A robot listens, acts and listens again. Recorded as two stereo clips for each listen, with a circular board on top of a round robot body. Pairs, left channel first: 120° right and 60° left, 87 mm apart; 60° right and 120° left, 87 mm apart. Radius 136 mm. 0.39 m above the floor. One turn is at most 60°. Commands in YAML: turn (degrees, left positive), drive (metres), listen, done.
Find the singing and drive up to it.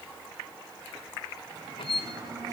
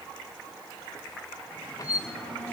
turn: 15
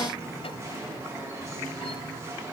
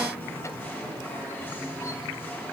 drive: 1.0
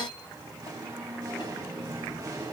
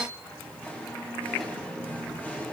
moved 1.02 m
turn: 10
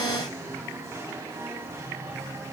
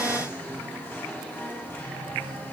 drive: 1.0
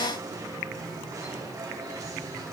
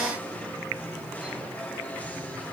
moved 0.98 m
turn: 10
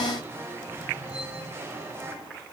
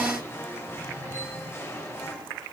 drive: 1.0
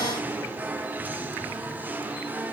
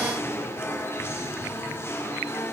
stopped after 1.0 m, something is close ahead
done: "Arrived at the singing, straight ahead."